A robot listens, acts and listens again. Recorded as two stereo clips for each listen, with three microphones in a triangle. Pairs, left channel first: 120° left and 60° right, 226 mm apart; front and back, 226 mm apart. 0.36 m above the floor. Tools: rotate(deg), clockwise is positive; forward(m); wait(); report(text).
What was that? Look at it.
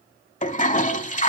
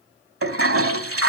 rotate(-175)
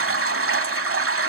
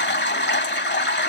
rotate(40)
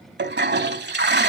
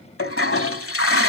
rotate(20)
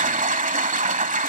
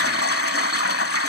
report("Found it: a toilet flushing, straight ahead.")